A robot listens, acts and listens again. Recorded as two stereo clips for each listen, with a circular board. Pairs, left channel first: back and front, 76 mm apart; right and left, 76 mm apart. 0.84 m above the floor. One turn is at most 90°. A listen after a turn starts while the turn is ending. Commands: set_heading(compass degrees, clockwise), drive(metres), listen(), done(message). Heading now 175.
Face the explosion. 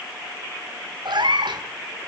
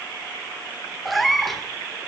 listen()
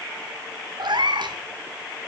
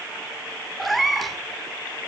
listen()
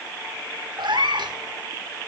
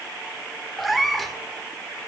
done("I can't make out an explosion to turn to.")